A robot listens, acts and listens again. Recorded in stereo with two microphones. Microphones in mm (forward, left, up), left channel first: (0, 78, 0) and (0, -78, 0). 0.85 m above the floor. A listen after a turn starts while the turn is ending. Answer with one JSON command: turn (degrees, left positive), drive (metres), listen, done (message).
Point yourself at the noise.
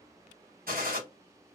{"turn": -70}
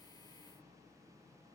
{"listen": true}
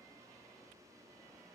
{"done": "I heard a gunshot, but can't make it out now. It was about straight ahead or 40° right."}